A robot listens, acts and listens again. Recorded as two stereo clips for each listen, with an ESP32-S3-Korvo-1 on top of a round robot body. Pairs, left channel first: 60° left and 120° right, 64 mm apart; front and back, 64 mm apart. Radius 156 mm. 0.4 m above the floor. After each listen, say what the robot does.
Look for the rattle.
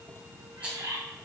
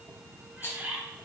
Turn 50° right.
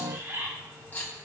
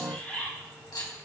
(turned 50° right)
Found it: a rattle, straight ahead, 2 to 4 m away.